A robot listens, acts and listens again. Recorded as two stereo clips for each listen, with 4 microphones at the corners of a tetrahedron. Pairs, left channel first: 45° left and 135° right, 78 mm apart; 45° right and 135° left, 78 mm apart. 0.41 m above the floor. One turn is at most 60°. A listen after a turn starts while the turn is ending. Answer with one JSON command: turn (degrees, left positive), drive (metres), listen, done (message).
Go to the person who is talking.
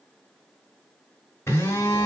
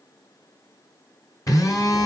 {"listen": true}
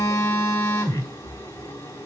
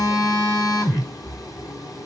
{"listen": true}
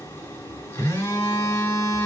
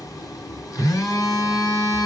{"done": "I can't make out anyone speaking, only a phone buzzing."}